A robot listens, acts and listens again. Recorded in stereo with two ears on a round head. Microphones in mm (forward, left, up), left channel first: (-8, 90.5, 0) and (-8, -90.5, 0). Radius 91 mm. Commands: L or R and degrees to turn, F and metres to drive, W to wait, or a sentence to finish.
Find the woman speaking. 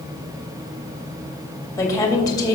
L20
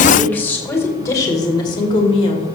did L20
L30
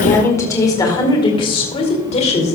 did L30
L35
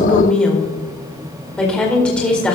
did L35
Facing the woman speaking.